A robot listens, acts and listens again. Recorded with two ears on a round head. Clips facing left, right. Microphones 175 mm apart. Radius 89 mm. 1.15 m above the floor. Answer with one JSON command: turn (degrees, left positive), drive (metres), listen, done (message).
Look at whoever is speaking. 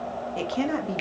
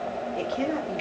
{"turn": 65}
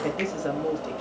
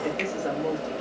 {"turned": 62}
{"turn": 25}
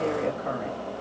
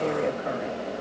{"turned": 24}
{"done": "Facing the woman speaking."}